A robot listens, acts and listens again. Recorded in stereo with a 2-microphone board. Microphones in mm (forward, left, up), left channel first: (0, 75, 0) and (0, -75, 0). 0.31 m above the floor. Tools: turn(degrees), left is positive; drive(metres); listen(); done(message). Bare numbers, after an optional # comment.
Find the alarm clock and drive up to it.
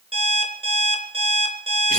# The alarm clock: about 40° right or 140° right.
turn(-40)
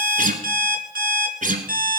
# So it is at 100° right.
turn(-100)
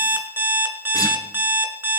# The alarm clock is now 15° right.
turn(-15)
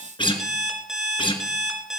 drive(1.0)
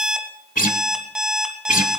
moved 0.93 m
drive(1.0)
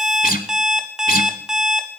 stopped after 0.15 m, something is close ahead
done("I am next to the alarm clock.")